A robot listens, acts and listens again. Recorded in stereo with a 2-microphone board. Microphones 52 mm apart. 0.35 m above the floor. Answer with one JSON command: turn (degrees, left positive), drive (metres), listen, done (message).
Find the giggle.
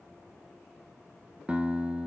{"listen": true}
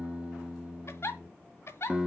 {"turn": 60}
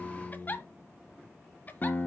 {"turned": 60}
{"turn": 40}
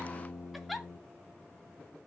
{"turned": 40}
{"done": "Facing the giggle."}